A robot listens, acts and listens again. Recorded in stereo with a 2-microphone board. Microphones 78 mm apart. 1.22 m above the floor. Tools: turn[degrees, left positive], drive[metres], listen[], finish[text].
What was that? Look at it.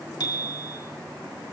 Thought: The bicycle bell: about 60° left or 120° left.
Action: turn[60]
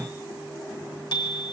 Thought: So it is at 65° left.
Action: turn[65]
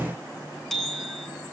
Action: finish[Found it: a bicycle bell, straight ahead, 2 to 4 m away.]